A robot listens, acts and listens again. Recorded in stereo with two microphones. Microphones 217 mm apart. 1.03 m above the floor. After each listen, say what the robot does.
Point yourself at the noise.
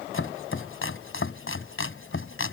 Turn 70° left.
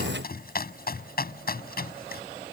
Turn 45° left.
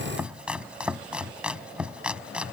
Found it: chopping, straight ahead.